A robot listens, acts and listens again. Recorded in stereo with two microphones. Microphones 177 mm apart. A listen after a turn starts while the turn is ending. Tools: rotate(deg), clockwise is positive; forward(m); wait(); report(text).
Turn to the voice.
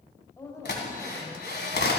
rotate(-15)
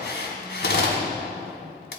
wait()
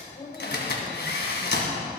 rotate(-150)
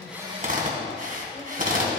wait()
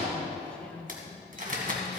report("Facing the woman speaking, 2 to 4 m away.")